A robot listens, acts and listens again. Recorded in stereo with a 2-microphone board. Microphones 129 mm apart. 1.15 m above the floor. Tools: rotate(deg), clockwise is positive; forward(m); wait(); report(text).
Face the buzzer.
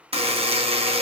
rotate(50)
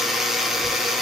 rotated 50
report("Facing the buzzer, under 1 m away.")